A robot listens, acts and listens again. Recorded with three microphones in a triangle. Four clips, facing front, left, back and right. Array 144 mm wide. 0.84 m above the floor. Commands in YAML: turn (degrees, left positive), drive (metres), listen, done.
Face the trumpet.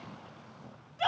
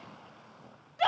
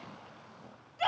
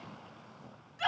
listen: true
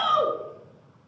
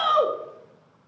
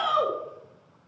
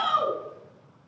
listen: true
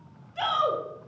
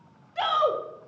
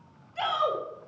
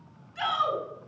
done: "I can't make out a trumpet to turn to."